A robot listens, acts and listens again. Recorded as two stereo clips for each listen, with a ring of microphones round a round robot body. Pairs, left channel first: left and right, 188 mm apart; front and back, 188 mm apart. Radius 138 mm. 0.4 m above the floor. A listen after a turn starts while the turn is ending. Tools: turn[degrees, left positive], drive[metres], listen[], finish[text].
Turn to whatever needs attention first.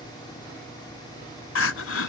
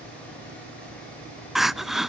Thought: The crying: 90° left.
Action: turn[90]
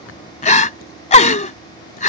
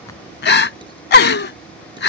Thought: The crying is now 35° left.
Action: turn[35]
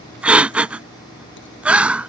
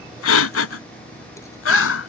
Action: finish[Found it: crying, straight ahead.]